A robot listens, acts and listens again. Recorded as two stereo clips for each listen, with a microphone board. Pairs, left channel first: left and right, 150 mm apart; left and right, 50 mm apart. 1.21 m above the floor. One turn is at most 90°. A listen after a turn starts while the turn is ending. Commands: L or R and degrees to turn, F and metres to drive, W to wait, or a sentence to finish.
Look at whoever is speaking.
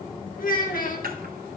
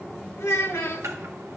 L70
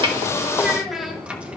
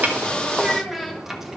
Facing the child speaking.